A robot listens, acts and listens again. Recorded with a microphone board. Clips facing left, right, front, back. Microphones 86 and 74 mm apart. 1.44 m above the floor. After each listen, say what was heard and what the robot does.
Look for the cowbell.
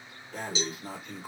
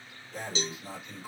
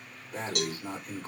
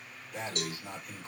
The cowbell: 10° left. Turn 10° left.
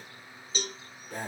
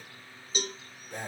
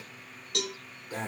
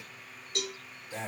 Facing the cowbell, 1 to 2 m away.